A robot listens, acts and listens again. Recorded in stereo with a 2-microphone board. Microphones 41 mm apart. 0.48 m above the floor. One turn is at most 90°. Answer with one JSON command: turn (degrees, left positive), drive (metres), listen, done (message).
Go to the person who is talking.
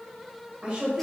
{"turn": -30}
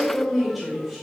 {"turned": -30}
{"drive": 1.0}
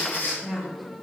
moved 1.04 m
{"drive": 1.0}
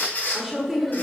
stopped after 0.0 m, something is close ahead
{"turn": -10}
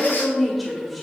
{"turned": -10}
{"done": "I am next to the woman speaking."}